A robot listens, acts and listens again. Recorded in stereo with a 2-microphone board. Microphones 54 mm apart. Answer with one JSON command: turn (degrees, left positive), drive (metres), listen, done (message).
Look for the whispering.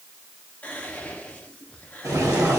{"turn": 25}
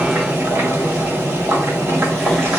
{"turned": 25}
{"listen": true}
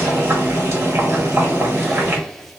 {"done": "Facing the whispering, under 1 m away."}